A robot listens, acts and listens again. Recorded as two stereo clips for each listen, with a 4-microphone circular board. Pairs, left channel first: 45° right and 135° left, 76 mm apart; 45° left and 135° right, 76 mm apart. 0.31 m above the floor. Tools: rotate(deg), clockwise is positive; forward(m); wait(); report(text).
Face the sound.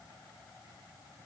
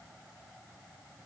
wait()
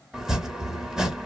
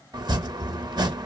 rotate(145)
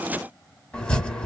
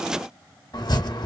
rotate(-30)
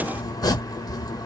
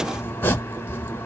rotate(15)
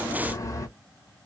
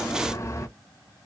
report("Found it: chopping, straight ahead.")